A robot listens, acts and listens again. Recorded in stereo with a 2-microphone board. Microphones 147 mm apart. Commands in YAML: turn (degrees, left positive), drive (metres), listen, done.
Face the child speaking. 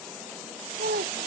turn: -75
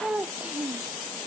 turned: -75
turn: -10
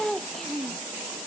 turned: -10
done: "Facing the child speaking."